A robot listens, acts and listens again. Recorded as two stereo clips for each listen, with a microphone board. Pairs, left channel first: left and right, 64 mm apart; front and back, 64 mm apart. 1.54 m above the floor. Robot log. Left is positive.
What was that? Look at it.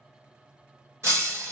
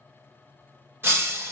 note: The breaking glass: 130° right.
cmd yaw -130
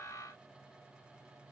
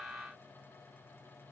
end: Facing where the breaking glass came from. I can't hear it now.